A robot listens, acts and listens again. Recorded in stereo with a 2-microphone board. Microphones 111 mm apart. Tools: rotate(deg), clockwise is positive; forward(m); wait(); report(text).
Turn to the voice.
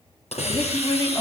rotate(-40)
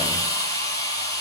wait()
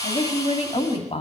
rotate(-95)
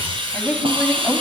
rotate(-15)
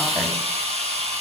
wait()
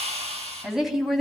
report("Facing the woman speaking.")